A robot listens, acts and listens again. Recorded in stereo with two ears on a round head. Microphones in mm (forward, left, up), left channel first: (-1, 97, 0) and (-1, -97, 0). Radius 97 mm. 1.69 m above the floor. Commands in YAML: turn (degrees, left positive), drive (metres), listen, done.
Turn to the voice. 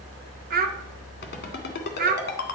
turn: -40
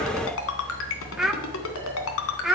done: "Found it: a child speaking, straight ahead."